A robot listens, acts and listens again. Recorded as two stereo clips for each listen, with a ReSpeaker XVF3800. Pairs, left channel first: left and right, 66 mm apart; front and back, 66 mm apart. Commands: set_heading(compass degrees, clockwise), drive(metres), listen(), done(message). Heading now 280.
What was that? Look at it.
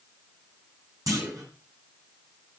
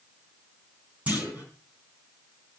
set_heading(30)
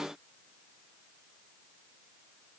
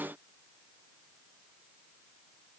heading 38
done("Facing where the clunk came from. I can't hear it now.")